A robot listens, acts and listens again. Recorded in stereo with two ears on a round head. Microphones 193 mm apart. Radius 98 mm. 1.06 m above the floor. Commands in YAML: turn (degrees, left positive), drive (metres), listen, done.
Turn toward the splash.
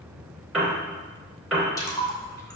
turn: 15
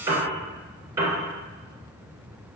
listen: true
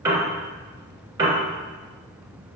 done: "I heard a splash, but can't make it out now. It was about straight ahead or 150° left."